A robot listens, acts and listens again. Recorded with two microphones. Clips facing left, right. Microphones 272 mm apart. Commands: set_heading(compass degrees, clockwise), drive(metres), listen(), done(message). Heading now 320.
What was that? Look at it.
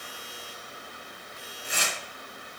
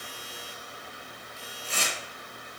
set_heading(290)
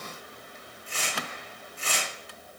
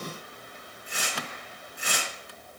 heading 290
set_heading(305)
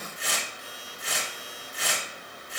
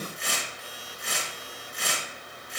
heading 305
done("Found it: tearing paper, straight ahead, 2 to 4 m away.")